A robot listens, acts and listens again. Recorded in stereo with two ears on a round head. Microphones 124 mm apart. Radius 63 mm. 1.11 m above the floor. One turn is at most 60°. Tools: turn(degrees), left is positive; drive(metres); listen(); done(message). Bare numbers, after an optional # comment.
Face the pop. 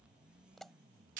turn(30)
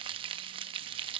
listen()
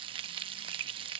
done("I heard a pop, but can't make it out now. It was about 30° right or 150° left.")